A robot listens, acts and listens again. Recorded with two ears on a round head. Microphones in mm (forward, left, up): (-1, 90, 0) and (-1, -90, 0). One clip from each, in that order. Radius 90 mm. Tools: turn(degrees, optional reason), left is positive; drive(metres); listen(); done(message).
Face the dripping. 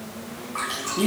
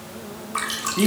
turn(degrees=-45, reason="The dripping: about 45° right or 135° right.")
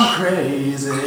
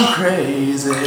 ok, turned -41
listen()
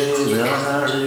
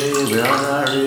listen()
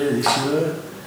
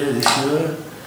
turn(degrees=-90, reason="So it is at 90° right.")
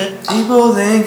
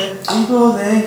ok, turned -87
done("Facing the dripping.")